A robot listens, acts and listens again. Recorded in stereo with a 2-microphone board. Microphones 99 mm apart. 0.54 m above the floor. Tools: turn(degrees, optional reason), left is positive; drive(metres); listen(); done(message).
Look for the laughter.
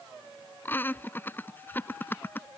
turn(degrees=20, reason="The laughter: about 20° left or 160° left.")
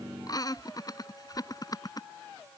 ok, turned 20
turn(degrees=140, reason="So it is at 140° left.")
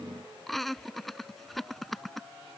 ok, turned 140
done("Facing the laughter.")